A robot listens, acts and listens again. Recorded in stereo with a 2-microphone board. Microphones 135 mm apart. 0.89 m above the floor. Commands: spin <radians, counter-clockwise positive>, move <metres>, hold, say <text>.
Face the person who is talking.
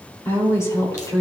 spin 0.52
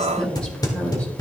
spin 0.17
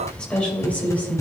spin 0.26
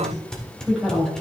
say Facing the woman speaking.